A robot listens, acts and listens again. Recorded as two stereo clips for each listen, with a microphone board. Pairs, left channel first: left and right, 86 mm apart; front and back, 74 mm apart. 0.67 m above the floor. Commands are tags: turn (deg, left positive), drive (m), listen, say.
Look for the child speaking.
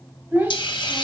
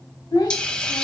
<turn deg="-20"/>
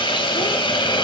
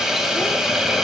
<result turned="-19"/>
<listen/>
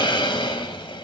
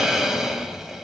<listen/>
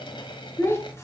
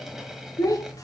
<turn deg="30"/>
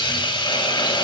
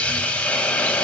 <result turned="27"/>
<listen/>
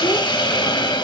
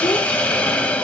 <listen/>
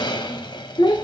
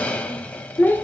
<turn deg="60"/>
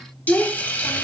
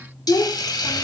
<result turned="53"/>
<turn deg="10"/>
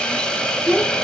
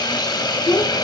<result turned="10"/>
<say>Facing the child speaking.</say>